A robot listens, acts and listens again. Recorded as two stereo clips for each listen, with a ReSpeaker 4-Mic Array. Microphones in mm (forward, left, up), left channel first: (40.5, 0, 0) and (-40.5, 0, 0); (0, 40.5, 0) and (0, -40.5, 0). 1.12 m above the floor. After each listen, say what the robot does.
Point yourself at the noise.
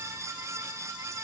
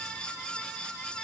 Keep listening.
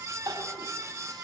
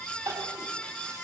Turn 140° right.
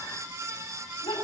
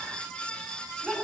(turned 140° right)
Found it: crying, straight ahead, over 4 m away.